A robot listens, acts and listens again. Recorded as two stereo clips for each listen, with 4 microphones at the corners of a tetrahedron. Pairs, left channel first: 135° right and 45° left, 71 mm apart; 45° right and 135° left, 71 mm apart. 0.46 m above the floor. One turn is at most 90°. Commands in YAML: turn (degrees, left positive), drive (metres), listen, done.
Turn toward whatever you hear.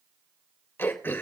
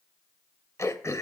turn: -80
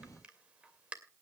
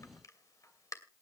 turn: -25
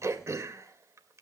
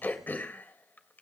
turn: 10
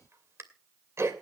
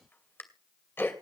done: "Facing the throat clearing, 2 to 4 m away."